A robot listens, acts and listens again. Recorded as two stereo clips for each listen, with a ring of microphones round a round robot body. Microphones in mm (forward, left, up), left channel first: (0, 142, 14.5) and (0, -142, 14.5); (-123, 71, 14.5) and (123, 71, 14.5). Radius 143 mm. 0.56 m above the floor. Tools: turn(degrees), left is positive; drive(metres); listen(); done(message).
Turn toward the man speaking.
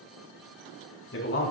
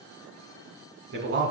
turn(degrees=40)
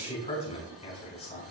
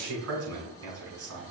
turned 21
turn(degrees=20)
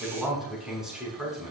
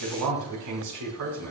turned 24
done("Found it: a man speaking, straight ahead, over 4 m away.")